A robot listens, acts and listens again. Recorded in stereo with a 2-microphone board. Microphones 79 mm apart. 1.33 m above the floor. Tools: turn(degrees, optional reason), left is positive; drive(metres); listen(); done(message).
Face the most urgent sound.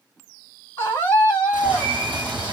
turn(degrees=30, reason="The scream: about 30° left or 150° left.")
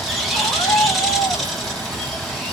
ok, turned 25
turn(degrees=130, reason="So it is at 130° left.")
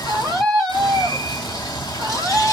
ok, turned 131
done("Found it: a scream, straight ahead, 1 to 2 m away.")